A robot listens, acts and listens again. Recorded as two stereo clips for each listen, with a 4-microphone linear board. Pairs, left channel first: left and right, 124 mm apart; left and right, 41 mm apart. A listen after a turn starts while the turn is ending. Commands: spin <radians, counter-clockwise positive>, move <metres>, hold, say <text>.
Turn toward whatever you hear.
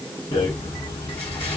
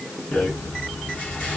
spin 0.70
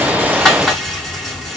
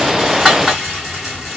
say Facing the rattle.